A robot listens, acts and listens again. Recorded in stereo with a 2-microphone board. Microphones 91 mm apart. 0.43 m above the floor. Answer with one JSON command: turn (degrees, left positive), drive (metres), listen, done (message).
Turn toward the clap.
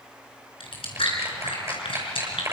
{"turn": -30}
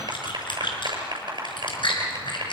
{"turn": -120}
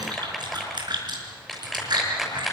{"done": "Facing the clap."}